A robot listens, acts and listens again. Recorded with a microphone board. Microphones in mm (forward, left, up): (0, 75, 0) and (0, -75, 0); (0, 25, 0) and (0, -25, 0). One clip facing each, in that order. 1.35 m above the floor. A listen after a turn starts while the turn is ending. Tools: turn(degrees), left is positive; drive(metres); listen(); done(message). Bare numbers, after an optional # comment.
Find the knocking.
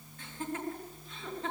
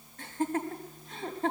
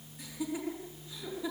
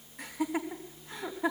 listen()
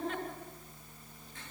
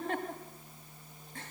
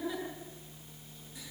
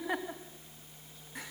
listen()
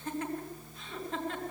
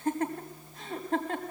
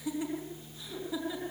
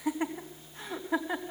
done("I can't make out knocking, only laughter.")